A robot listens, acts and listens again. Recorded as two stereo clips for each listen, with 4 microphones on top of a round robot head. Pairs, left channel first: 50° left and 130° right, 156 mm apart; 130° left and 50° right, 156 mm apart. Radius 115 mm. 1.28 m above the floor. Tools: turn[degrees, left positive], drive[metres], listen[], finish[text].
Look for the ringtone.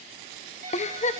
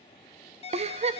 Thought: The ringtone: 175° right.
Action: turn[-175]
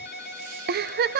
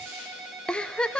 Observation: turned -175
Thought: The ringtone is now 40° left.
Action: turn[40]
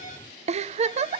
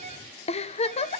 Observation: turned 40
Action: finish[Found it: a ringtone, straight ahead, over 4 m away.]